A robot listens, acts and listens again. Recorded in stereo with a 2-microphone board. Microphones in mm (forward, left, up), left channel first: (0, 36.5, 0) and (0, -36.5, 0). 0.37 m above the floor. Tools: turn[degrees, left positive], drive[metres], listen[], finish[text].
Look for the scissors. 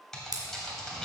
Thought: The scissors: about 55° right or 125° right.
Action: turn[-55]
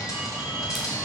Action: listen[]
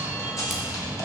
Action: listen[]
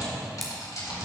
Action: finish[I heard scissors, but can't make it out now. It was about straight ahead or 70° right.]